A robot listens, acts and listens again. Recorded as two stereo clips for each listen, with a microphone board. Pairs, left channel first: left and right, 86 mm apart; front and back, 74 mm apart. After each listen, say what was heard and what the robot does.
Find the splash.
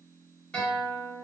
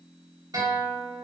Keep listening.
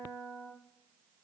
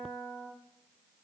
Keep listening.
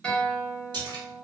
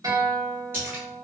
The splash: 120° right. Turn 120° right.
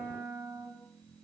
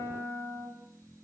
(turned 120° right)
Facing where the splash came from. I can't hear it now.